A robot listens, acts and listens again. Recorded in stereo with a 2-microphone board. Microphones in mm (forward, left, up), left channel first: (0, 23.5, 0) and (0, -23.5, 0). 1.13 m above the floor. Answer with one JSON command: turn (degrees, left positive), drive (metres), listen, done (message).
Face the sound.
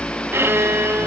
{"turn": -60}
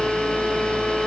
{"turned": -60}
{"listen": true}
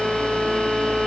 {"turn": -15}
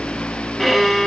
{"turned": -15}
{"done": "Found it: a violin, straight ahead."}